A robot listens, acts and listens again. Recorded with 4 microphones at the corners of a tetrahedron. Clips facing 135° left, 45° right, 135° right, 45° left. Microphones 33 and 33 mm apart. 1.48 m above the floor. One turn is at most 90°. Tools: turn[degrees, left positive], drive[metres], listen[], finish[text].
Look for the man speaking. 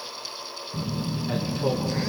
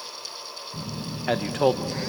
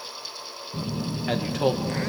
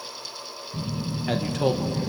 Thought: The man speaking: 55° right.
Action: turn[-55]
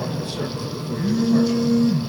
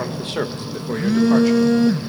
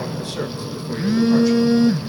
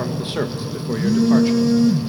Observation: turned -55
Thought: The man speaking is now 10° right.
Action: turn[-10]
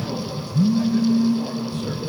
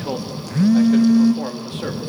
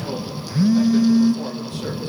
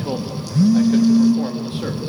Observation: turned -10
Thought: The man speaking is now 15° right.
Action: turn[-15]
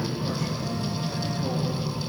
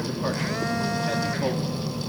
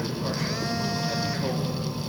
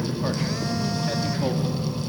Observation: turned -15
Action: listen[]
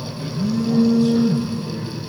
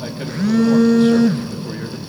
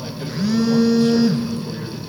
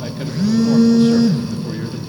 Action: listen[]
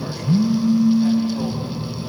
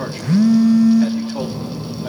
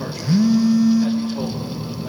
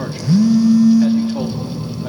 Action: finish[Facing where the man speaking came from. I can't hear it now.]